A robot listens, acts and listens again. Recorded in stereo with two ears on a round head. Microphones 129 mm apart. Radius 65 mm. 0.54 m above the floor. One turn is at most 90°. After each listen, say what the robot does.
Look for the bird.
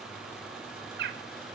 Turn 90° right.
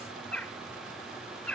Turn 10° left.
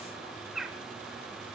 Facing the bird, under 1 m away.